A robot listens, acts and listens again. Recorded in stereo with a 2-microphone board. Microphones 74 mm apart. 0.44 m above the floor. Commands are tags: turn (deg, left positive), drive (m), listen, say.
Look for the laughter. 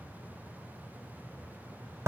<listen/>
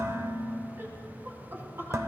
<turn deg="-35"/>
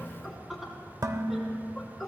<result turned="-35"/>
<say>Found it: laughter, straight ahead.</say>